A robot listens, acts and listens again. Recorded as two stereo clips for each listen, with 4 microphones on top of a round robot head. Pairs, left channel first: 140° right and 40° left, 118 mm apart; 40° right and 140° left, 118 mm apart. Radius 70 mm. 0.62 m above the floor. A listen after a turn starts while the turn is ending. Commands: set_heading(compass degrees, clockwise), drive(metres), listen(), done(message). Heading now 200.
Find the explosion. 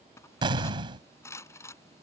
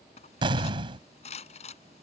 set_heading(110)
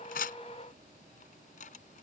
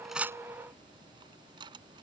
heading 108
done("I heard an explosion from this way, but can't make it out now.")